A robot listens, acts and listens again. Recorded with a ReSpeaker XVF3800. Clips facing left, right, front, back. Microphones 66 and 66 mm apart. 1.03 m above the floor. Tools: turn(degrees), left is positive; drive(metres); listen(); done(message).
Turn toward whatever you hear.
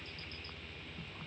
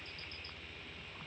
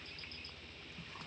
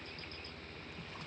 listen()
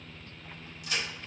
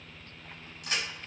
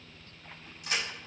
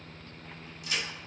turn(degrees=-45)
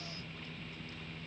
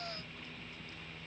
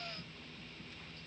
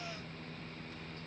done("Facing where the crack came from. I can't hear it now.")